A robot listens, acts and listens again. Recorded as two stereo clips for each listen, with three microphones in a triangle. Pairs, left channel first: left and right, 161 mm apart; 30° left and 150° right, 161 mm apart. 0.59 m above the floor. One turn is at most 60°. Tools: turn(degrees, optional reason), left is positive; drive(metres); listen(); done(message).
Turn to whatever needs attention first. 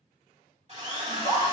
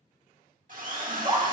turn(degrees=-60, reason="The scream: 95° right.")
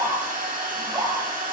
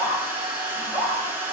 turn(degrees=-40, reason="The scream is now 40° right.")
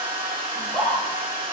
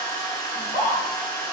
done("Found it: a scream, straight ahead, 2 to 4 m away.")